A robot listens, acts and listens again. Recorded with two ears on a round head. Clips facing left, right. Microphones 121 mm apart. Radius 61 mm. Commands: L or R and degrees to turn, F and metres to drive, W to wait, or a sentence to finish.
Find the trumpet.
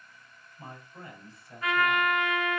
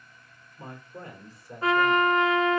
R30
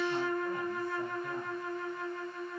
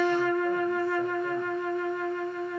R120
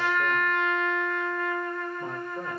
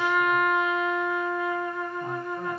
Facing the trumpet, under 1 m away.